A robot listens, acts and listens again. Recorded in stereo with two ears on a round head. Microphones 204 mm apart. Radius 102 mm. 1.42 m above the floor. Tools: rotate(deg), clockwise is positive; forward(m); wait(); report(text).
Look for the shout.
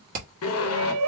rotate(70)
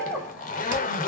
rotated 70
report("Facing the shout.")